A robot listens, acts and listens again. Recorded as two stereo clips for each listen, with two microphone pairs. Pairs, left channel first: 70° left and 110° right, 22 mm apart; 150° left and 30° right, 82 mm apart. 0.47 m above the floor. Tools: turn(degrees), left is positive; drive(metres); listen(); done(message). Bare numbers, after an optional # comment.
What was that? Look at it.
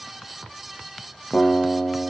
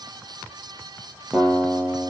# The guitar: 50° left.
turn(50)
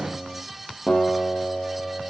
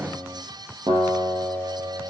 done("Facing the guitar.")